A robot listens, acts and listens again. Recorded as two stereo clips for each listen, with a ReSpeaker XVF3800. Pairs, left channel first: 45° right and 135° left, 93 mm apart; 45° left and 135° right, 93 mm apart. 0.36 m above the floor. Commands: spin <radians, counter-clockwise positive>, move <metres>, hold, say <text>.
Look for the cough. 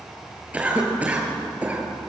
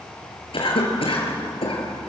spin 1.05
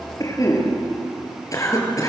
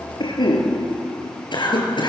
spin 0.17
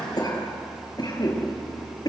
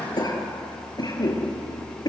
say Found it: a cough, straight ahead, over 4 m away.